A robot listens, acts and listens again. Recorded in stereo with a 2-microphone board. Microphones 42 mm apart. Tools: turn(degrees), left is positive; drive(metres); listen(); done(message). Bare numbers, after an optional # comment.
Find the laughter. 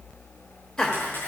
turn(30)
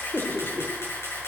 # So it is at 130° left.
turn(130)
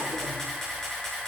listen()
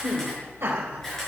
# The laughter is now 50° right.
turn(-50)
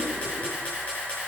listen()
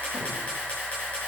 listen()
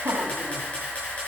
# The laughter is now 35° right.
turn(-35)
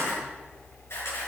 listen()
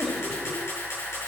# The laughter is now 15° left.
turn(15)
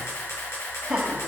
done("Facing the laughter.")